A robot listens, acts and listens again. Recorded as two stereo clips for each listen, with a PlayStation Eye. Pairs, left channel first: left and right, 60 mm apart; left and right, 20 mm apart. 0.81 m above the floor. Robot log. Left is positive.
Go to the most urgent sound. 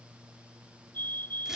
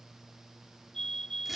note: The fire alarm: about 35° left or 145° left.
cmd yaw +35
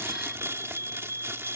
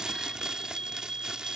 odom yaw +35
note: So it is at 105° left.
cmd yaw +105
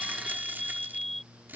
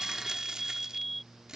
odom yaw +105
cmd fwd 1.0
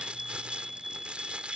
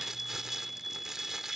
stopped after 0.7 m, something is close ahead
end: Something is in my way. I am facing the fire alarm but have not reached it.